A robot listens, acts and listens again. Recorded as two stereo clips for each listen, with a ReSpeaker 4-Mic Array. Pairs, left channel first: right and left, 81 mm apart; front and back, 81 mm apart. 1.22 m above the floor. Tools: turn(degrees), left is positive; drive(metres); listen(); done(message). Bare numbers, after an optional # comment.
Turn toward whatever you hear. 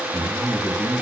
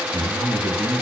# The man speaking: 160° left.
turn(160)
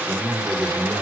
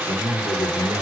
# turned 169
# The man speaking is now 10° left.
turn(10)
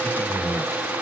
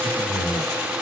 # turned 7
done("Found it: a man speaking, straight ahead.")